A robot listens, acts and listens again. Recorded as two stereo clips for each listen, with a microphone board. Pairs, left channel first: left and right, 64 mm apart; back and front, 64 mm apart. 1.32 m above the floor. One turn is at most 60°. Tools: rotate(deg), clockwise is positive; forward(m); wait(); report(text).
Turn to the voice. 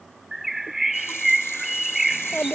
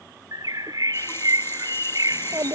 rotate(-25)
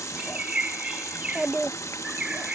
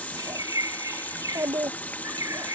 rotate(20)
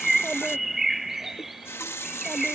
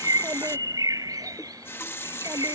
wait()
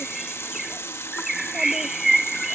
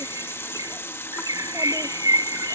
wait()
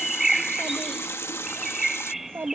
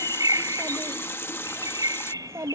rotate(40)
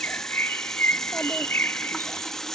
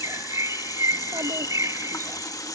wait()
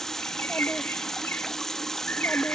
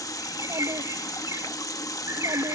report("Facing the child speaking.")